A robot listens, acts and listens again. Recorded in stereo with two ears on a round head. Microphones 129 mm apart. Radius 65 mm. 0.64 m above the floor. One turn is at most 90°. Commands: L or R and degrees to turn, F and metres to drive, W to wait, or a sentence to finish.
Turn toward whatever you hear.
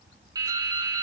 R25
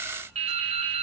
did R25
R90
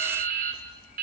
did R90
R60
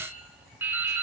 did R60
R15
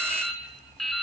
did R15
Facing the dripping, 2 to 4 m away.